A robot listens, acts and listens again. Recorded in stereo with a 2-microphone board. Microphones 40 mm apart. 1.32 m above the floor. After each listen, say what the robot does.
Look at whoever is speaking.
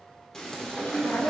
Turn 90° left.
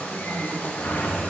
Keep listening.
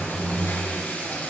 Keep listening.
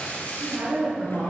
Turn 85° right.
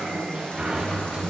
Keep listening.
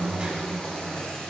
Keep listening.
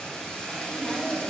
Facing the woman speaking.